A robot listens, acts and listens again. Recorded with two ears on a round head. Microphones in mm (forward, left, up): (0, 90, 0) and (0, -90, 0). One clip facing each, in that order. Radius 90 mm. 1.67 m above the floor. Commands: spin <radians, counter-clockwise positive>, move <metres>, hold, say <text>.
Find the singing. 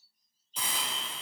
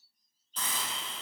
hold
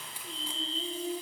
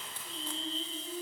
spin 1.22
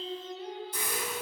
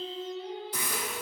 spin 0.70
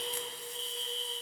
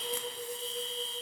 say Found it: singing, straight ahead.